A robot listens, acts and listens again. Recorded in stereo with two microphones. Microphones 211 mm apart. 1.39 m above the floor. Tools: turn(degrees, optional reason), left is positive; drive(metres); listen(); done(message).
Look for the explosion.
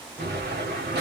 turn(degrees=-50, reason="The explosion: about 50° right or 130° right.")
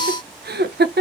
listen()
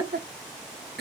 done("I heard an explosion, but can't make it out now. It was about straight ahead or 80° right.")